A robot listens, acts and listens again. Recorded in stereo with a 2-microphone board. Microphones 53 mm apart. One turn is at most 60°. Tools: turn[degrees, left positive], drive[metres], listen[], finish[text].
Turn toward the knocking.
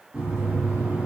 Thought: The knocking: about 20° right or 160° right.
Action: turn[-20]
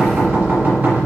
Thought: So it is at 140° right.
Action: turn[-60]
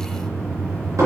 Thought: The knocking is now 80° right.
Action: turn[-60]
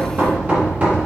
Thought: The knocking is now 30° right.
Action: turn[-30]
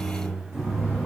Action: finish[Found it: knocking, straight ahead.]